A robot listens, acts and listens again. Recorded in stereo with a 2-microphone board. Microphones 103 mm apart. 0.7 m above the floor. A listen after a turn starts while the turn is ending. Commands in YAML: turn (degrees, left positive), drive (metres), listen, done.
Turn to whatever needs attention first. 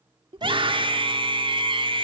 turn: -60
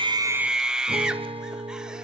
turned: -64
turn: -10
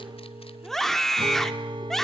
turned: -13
done: "Found it: a scream, straight ahead, 1 to 2 m away."